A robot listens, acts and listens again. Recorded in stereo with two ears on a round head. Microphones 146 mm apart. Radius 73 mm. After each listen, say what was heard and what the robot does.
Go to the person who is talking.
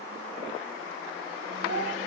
Turn 90° right.
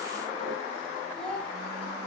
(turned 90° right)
Drive 1.0 m forward.
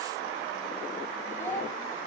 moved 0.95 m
The child speaking is now 15° left. Turn 15° left.
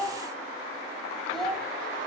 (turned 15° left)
Drive 1.0 m forward.
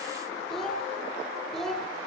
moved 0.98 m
Drive 1.0 m forward.
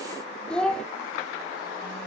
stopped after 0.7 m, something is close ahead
Arrived at the child speaking, straight ahead.